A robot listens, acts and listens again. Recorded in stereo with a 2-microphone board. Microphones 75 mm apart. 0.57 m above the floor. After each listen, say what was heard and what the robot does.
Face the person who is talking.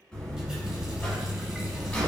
Keep listening.
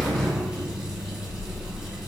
Keep listening.
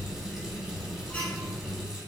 I can't make out anyone speaking, only a buzzer.